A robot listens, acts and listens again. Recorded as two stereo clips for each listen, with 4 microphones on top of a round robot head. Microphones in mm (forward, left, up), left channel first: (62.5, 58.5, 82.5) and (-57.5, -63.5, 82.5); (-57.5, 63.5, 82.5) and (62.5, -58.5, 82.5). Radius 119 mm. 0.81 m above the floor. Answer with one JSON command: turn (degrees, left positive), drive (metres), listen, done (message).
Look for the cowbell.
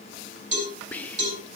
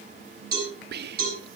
{"turn": -85}
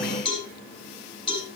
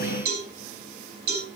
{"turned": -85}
{"turn": -20}
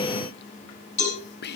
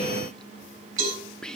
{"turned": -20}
{"done": "Facing the cowbell."}